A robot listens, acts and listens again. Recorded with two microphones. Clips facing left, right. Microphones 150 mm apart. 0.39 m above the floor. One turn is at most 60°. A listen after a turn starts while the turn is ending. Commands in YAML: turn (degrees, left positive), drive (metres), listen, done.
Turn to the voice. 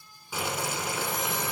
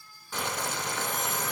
listen: true
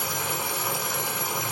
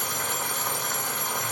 listen: true
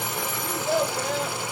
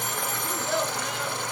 turn: 40
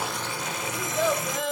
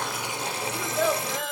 done: "Found it: a child speaking, straight ahead, 1 to 2 m away."